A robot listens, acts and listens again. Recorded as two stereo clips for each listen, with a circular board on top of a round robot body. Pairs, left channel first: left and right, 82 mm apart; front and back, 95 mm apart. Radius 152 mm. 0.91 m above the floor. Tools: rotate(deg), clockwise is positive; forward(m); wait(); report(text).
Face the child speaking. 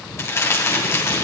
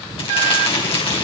wait()
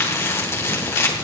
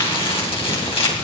wait()
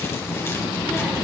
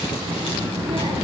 rotate(175)
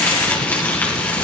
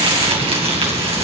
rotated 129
rotate(45)
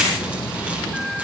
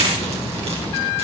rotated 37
report("Facing the child speaking.")